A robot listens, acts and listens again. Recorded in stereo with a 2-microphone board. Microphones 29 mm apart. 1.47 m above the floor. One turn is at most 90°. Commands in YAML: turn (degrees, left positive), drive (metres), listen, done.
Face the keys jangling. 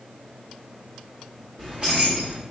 turn: -35
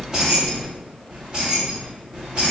turn: -35
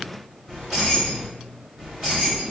turn: -15
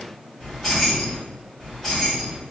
done: "Found it: keys jangling, straight ahead."